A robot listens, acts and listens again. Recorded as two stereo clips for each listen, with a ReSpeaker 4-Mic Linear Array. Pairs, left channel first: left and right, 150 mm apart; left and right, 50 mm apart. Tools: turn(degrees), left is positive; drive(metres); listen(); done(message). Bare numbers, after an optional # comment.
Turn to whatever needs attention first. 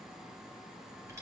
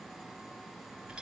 listen()
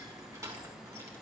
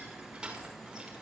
listen()
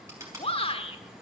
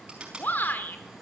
# The shout: about 40° left or 140° left.
turn(40)
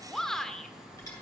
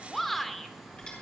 done("Facing the shout.")